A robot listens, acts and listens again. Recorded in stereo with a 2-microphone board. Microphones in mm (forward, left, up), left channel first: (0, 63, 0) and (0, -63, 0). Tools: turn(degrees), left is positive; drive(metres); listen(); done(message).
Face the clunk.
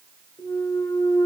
turn(degrees=30)
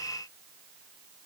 listen()
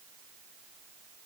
done("I heard a clunk, but can't make it out now. It was about straight ahead or 120° left.")